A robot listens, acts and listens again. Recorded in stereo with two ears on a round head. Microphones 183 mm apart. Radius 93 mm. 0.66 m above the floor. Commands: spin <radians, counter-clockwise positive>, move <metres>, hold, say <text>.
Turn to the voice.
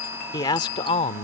spin 0.61
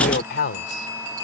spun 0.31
spin 2.09
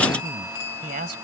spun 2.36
spin -0.79
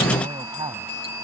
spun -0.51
spin -0.35
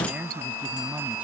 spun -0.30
say Facing the man speaking.